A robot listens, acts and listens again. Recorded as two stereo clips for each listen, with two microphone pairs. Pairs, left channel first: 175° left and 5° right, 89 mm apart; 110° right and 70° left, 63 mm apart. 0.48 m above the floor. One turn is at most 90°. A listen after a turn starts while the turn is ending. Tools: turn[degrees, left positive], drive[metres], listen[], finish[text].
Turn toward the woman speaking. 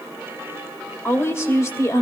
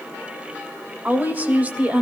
Thought: The woman speaking: 135° left.
Action: turn[90]
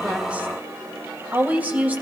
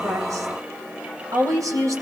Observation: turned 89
Thought: The woman speaking is now 70° left.
Action: turn[70]
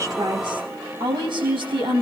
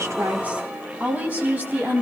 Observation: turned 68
Thought: The woman speaking is now 10° left.
Action: turn[10]
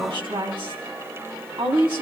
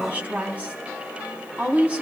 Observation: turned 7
Action: finish[Facing the woman speaking.]